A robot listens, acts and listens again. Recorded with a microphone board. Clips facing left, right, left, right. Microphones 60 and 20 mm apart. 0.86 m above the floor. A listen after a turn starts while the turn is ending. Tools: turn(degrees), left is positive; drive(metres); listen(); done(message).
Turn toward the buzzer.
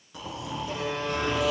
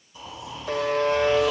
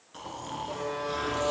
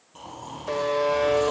turn(degrees=-65)
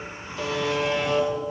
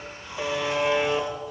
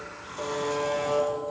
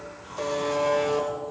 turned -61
turn(degrees=-10)
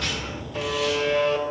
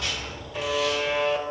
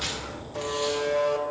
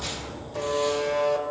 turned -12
done("Facing the buzzer, 1 to 2 m away.")